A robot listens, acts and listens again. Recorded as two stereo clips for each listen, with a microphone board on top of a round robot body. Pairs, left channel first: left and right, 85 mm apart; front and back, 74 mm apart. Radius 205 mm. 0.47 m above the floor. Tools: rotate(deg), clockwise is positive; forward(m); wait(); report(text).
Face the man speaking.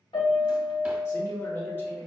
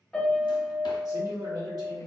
rotate(-160)
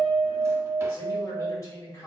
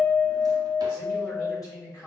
rotate(-40)
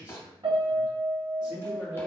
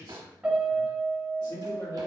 rotate(10)
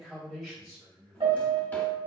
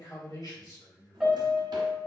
report("Facing the man speaking, 2 to 4 m away.")